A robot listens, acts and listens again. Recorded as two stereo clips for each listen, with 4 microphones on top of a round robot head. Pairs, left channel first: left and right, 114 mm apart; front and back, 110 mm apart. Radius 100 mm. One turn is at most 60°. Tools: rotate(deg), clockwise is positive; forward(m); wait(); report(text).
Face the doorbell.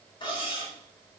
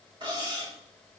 wait()
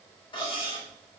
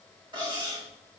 wait()
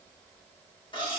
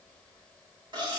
report("I can't make out a doorbell, only cutlery clinking.")